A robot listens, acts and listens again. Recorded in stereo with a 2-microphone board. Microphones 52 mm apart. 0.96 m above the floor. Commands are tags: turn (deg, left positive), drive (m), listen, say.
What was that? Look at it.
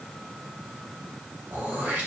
<turn deg="-30"/>
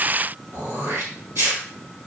<turn deg="-120"/>
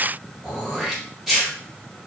<say>Facing the throat clearing.</say>